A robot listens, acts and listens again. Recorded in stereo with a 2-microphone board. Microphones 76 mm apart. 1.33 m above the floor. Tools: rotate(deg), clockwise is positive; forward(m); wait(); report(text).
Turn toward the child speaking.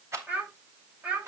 rotate(15)
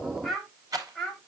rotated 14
rotate(-30)
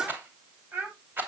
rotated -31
rotate(20)
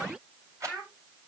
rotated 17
report("Found it: a child speaking, straight ahead.")